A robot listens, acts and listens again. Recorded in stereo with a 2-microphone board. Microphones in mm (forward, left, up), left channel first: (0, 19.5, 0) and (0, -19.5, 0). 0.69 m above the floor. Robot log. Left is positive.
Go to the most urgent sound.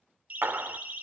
note: The siren: about 45° right or 135° right.
cmd yaw -45
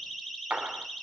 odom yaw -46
cmd fwd 1.0
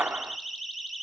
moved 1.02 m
cmd fwd 1.0
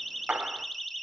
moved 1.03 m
cmd fwd 1.0
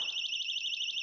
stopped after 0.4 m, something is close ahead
note: The siren is now 10° left.
cmd yaw +10
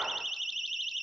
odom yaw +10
end: Arrived at the siren, straight ahead.